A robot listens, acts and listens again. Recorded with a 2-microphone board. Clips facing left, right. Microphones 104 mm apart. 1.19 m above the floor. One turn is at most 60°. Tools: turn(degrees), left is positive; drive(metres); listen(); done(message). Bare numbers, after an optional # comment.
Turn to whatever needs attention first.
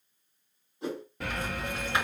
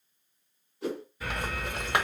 # The alarm: about 65° left or 115° left.
turn(60)
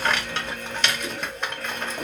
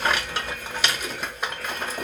# So it is at 50° left.
turn(50)
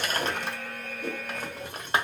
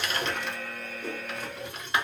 done("Found it: an alarm, straight ahead, 1 to 2 m away.")